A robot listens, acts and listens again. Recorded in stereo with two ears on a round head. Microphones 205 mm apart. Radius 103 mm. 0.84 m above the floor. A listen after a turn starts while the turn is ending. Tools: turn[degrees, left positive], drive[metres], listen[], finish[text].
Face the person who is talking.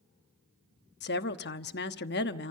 Thought: The woman speaking: about 45° left or 135° left.
Action: turn[45]
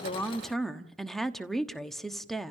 Action: finish[Facing the woman speaking.]